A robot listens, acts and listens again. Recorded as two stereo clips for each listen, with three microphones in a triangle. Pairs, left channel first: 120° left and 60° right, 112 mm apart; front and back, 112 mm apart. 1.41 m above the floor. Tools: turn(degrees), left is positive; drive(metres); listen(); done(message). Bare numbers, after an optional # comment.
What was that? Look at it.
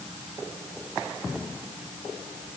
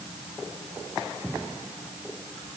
listen()
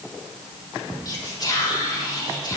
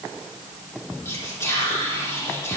# The whispering: 65° left.
turn(65)
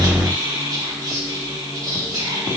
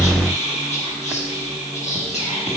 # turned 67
done("Found it: whispering, straight ahead, 1 to 2 m away.")